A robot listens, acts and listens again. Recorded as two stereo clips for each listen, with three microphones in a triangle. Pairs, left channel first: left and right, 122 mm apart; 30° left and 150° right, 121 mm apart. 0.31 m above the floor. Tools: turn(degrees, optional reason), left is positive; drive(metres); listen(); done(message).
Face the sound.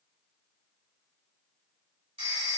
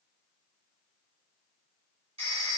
turn(degrees=-125, reason="The phone ringing: 125° right.")
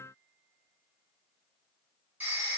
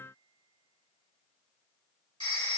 turn(degrees=-15, reason="The phone ringing is now 15° right.")
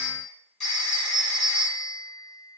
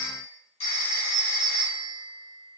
done("Found it: a phone ringing, straight ahead.")